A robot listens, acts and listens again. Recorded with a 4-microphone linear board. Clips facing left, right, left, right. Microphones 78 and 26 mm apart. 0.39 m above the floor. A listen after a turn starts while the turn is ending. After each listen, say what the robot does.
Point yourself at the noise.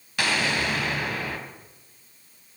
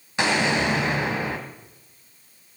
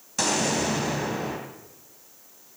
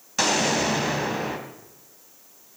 Turn 25° right.
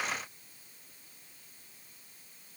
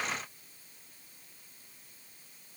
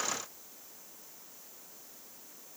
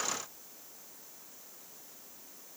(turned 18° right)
Keep listening.
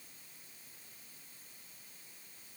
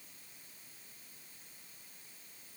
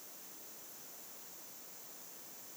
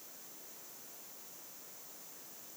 I heard an explosion, but can't make it out now. It was about 5° right or 140° right.